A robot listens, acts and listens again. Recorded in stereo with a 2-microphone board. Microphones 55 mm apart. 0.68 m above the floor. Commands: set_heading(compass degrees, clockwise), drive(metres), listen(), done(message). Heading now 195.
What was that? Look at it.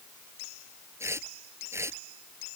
set_heading(250)
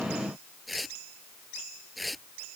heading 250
done("Found it: tearing paper, straight ahead.")